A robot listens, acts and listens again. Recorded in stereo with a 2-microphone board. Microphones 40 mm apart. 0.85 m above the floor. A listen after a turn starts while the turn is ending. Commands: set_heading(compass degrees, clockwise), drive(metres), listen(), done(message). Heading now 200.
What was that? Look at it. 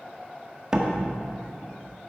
set_heading(215)
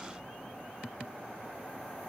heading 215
listen()
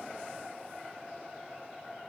done("I heard a door slam, but can't make it out now. It was about straight ahead or 150° right.")